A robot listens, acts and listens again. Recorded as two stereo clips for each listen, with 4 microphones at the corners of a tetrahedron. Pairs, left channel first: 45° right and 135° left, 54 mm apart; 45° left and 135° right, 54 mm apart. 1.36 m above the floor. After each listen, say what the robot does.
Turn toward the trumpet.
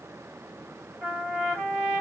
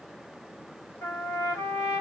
Turn 55° left.
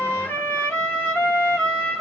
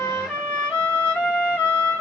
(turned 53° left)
Found it: a trumpet, straight ahead, 2 to 4 m away.